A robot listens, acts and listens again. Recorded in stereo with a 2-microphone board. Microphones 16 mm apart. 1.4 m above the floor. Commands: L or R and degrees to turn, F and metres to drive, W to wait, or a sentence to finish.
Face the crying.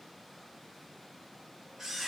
W
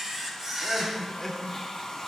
L30
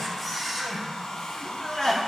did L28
L140
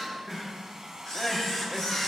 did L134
Facing the crying.